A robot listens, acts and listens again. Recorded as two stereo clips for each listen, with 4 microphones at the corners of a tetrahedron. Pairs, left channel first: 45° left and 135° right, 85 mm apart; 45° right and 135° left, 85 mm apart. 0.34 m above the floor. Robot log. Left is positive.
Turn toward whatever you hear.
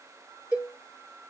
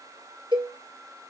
note: The cowbell: 150° left.
cmd yaw +150
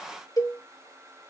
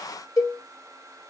end: Facing the cowbell.